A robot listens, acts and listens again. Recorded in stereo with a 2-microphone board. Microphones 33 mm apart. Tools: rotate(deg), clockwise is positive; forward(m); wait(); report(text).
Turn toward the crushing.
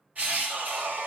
rotate(55)
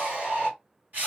rotate(65)
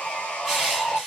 report("Facing the crushing, 2 to 4 m away.")